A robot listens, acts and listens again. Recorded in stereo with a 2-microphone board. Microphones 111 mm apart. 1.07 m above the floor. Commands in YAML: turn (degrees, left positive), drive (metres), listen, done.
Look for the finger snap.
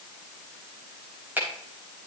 turn: -15
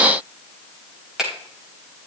done: "Facing the finger snap, over 4 m away."